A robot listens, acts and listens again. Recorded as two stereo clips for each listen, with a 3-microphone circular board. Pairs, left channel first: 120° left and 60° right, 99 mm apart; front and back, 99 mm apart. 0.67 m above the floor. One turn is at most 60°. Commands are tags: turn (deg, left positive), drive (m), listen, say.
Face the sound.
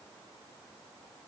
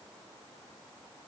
<listen/>
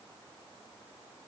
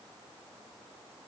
<listen/>
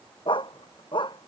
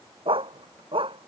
<turn deg="60"/>
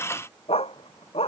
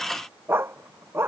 <turn deg="60"/>
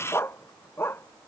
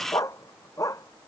<turn deg="55"/>
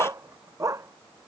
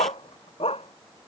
<say>Facing the dog barking.</say>